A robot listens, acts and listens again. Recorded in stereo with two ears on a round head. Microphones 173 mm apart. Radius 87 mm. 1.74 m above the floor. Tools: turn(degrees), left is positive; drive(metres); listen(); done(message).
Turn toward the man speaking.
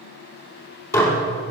listen()
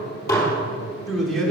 turn(degrees=30)
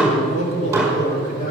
turn(degrees=135)
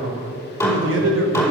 turn(degrees=-70)
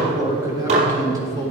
turn(degrees=-20)
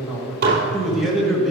done("Facing the man speaking, 2 to 4 m away.")